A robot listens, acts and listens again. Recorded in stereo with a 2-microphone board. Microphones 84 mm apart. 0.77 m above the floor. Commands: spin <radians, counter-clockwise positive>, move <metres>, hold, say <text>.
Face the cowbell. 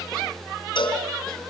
spin 1.31
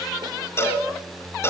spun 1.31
spin 0.52
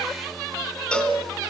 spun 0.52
spin 0.17
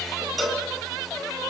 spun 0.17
say Found it: a cowbell, straight ahead.